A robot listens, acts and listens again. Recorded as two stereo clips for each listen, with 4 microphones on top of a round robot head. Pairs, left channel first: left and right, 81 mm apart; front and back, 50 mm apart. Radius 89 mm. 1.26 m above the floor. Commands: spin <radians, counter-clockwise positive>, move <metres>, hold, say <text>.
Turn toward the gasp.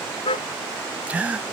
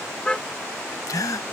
spin -0.26
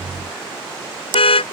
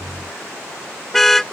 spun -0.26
say Facing where the gasp came from. I can't hear it now.